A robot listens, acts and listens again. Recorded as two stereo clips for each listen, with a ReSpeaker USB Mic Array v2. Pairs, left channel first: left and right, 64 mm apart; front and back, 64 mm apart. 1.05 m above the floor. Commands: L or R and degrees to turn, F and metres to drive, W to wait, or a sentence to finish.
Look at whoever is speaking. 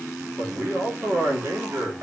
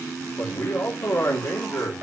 R45
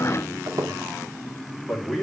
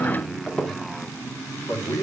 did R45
Facing the man speaking, 2 to 4 m away.